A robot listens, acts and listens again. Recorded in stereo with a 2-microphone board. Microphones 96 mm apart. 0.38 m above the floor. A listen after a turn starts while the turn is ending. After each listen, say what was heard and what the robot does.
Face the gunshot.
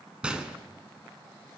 Turn 30° right.
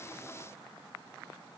Keep listening.
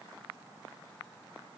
I heard a gunshot, but can't make it out now. It was about 20° left or 140° right.